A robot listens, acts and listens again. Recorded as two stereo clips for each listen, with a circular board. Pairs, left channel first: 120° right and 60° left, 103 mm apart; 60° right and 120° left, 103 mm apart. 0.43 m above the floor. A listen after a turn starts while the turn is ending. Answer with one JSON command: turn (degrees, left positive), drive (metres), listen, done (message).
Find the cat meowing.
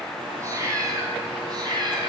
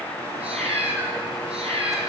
{"turn": 105}
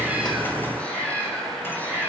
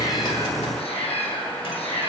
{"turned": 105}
{"turn": -50}
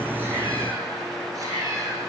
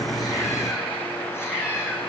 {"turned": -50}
{"done": "Found it: a cat meowing, straight ahead, 2 to 4 m away."}